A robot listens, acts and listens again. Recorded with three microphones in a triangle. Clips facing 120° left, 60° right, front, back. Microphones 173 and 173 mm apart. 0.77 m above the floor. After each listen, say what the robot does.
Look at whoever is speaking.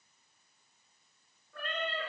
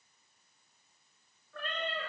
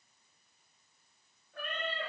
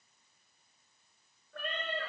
Keep listening.
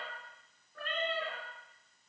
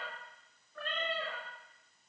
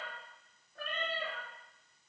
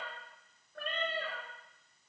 Keep listening.
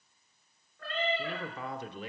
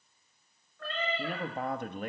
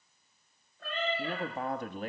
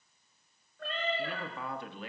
Turn 35° right.
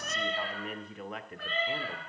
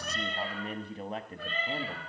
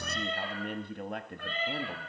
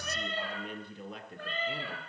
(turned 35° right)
Turn 10° right.
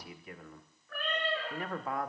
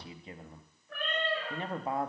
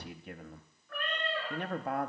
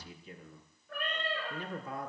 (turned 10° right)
Facing the man speaking.